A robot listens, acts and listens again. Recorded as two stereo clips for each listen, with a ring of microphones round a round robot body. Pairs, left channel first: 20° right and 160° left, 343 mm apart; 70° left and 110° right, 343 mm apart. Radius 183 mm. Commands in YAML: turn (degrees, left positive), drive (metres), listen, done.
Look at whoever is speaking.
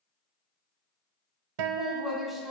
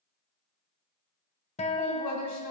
turn: 70
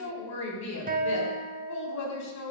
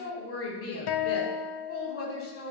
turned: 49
turn: 20
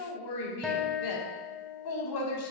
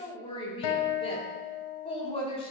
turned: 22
done: "Found it: a woman speaking, straight ahead."